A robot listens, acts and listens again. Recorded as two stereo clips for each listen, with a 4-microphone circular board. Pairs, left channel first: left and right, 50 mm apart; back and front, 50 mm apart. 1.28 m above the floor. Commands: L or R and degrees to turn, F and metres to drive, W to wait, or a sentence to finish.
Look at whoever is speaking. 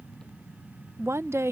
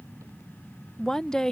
R100
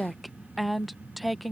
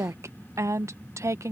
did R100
Facing the woman speaking.